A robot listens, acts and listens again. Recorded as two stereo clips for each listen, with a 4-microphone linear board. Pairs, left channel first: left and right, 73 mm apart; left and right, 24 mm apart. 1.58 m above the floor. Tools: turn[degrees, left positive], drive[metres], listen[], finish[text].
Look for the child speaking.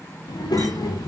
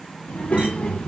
Thought: The child speaking: about 65° left or 115° left.
Action: turn[65]
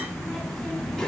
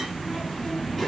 Thought: So it is at 10° left.
Action: turn[10]
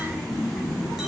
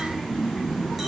Action: finish[Found it: a child speaking, straight ahead, under 1 m away.]